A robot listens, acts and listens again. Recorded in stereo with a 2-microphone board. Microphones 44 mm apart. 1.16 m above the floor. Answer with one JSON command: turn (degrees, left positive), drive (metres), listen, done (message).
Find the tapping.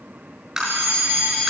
{"turn": -30}
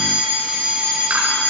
{"listen": true}
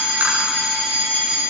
{"listen": true}
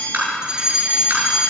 {"turn": -135}
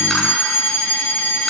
{"listen": true}
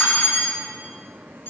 {"listen": true}
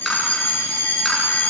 {"done": "Facing where the tapping came from. I can't hear it now."}